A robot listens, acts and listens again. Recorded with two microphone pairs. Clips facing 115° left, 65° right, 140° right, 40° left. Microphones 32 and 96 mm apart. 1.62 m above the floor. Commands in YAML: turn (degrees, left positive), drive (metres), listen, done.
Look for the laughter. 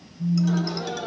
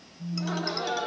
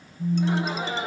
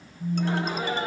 turn: -65
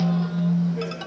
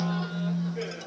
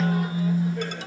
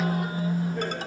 listen: true
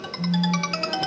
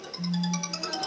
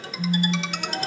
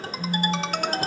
listen: true
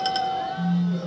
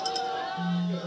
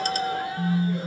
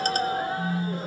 done: "I heard laughter from this way, but can't make it out now."